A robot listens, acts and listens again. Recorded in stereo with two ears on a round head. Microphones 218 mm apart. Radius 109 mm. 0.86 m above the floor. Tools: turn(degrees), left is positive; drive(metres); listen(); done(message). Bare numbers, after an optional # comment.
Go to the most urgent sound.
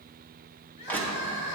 # The crying: about 50° left or 130° left.
turn(50)
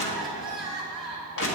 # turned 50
drive(1.0)
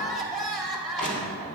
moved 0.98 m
drive(1.0)
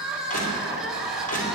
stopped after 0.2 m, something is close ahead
done("Arrived at the crying, straight ahead.")